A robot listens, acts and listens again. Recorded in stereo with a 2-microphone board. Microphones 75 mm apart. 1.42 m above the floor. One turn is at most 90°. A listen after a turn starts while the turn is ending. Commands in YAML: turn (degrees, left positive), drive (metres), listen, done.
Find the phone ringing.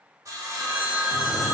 turn: -20
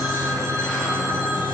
listen: true
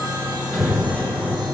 listen: true
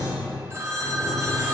turn: -90
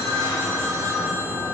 turn: -35
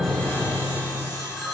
done: "Facing the phone ringing."